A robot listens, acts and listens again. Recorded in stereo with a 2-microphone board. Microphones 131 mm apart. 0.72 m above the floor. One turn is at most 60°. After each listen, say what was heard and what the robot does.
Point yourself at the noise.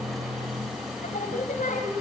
Turn 60° left.
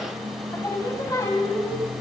So it is at 25° left. Turn 25° left.
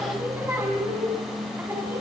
The singing is now 15° right. Turn 15° right.
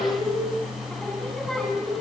Found it: singing, straight ahead.